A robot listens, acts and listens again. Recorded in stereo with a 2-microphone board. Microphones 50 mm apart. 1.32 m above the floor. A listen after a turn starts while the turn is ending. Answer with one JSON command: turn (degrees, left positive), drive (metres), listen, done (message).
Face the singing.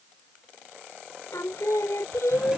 {"turn": 90}
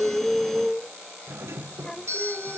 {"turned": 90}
{"turn": 15}
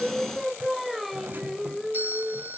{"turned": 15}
{"done": "Found it: singing, straight ahead."}